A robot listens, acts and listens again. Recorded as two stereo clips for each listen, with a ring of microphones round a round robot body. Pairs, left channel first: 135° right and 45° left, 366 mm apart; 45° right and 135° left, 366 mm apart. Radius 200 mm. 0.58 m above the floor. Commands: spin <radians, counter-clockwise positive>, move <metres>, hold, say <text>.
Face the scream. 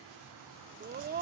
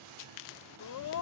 spin -0.26
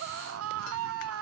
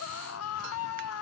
say Facing the scream.